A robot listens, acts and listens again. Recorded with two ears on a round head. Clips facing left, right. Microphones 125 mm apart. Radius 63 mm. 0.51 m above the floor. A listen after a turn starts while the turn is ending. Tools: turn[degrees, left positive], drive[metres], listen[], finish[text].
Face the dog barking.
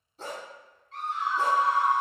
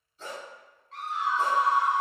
Thought: The dog barking: about 35° left or 145° left.
Action: turn[35]
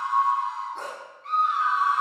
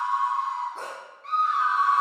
Action: finish[Facing the dog barking, 1 to 2 m away.]